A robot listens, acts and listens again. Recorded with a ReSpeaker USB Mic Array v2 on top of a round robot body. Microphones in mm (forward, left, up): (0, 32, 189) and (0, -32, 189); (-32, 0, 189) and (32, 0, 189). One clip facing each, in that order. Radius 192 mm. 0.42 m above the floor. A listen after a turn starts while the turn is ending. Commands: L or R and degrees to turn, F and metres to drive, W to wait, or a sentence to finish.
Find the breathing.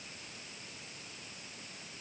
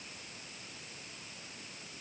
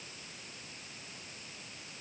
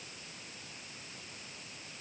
W
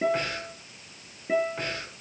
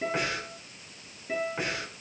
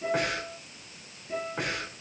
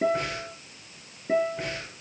R170
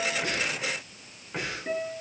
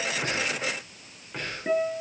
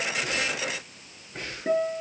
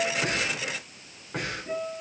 Facing the breathing.